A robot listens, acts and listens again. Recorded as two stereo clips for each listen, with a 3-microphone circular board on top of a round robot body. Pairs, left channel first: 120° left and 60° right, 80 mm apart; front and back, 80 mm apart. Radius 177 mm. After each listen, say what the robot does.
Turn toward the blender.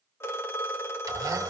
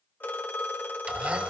Turn 110° right.
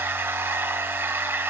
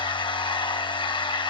Found it: a blender, straight ahead, 1 to 2 m away.